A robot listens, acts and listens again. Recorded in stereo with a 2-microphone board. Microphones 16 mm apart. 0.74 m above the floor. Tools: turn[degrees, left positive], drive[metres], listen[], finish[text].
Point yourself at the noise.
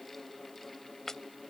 Thought: The chopping: about 30° left or 150° left.
Action: turn[30]
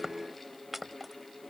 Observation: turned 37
Thought: So it is at 10° right.
Action: turn[-10]
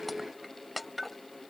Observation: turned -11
Action: finish[Facing the chopping.]